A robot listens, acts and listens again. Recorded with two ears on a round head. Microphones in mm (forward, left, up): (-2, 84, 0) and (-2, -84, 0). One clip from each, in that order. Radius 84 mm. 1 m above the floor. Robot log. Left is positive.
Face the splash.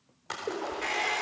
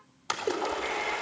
cmd yaw -90
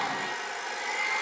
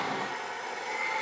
end: Facing where the splash came from. I can't hear it now.